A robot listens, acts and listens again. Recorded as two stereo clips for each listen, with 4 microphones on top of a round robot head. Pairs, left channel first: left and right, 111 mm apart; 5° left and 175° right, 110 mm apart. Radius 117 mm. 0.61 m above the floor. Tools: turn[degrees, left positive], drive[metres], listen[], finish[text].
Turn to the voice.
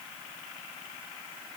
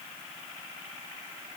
Action: listen[]
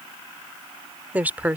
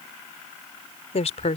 Thought: The woman speaking: 15° right.
Action: turn[-15]
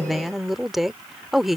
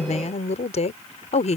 Action: finish[Found it: a woman speaking, straight ahead.]